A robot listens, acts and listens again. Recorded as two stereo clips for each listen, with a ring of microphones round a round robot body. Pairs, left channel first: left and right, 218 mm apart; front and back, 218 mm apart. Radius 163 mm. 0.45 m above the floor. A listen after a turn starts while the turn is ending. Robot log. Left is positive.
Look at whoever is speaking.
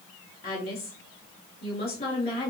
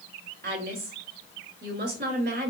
note: The woman speaking: 155° left.
cmd yaw +155
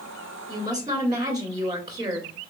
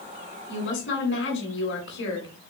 note: The woman speaking is now 20° right.
cmd yaw -20
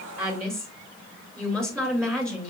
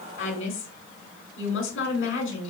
end: Found it: a woman speaking, straight ahead, 1 to 2 m away.